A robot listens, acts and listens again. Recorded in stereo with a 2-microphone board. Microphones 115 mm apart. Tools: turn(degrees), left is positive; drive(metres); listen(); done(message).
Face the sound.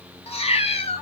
turn(degrees=70)
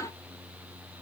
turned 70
listen()
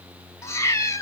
turn(degrees=30)
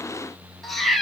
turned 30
done("Facing the cat meowing.")